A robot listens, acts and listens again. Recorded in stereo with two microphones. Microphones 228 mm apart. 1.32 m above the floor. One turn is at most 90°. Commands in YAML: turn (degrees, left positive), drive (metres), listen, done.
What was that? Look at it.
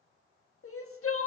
turn: 75
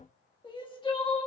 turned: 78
turn: 20
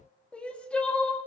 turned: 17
done: "Found it: crying, straight ahead, 1 to 2 m away."